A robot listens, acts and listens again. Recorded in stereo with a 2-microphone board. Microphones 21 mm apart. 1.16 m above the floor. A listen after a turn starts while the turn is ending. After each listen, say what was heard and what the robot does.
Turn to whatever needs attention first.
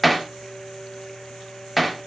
Keep listening.
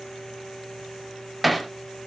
Keep listening.
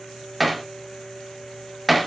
I can't make out anything urgent to turn to.